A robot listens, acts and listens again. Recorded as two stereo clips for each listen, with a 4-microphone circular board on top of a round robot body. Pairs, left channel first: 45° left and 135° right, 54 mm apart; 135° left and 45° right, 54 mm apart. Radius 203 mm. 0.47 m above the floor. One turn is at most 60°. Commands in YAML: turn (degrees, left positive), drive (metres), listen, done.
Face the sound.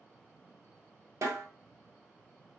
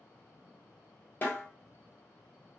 turn: -60
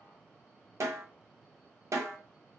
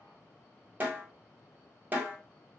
turn: -60
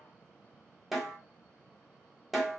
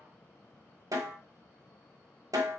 turn: -45
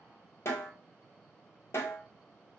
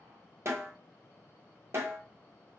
done: "Facing the snare drum, 1 to 2 m away."